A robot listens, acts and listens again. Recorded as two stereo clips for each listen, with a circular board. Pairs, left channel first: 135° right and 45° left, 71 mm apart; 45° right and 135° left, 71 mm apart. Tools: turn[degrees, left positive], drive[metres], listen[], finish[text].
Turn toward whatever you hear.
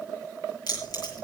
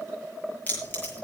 Thought: The keys jangling: 110° right.
Action: turn[-110]
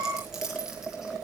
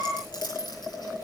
Thought: The keys jangling is now 35° right.
Action: turn[-35]
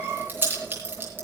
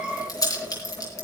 Thought: The keys jangling is now 15° right.
Action: turn[-15]
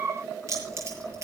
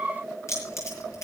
Action: finish[Facing the keys jangling.]